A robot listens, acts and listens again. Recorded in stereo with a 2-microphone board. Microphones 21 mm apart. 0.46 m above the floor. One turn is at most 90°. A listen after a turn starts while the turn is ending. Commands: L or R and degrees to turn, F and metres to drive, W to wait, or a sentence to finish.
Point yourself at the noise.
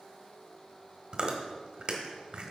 R40
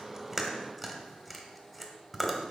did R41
Facing the chewing, 1 to 2 m away.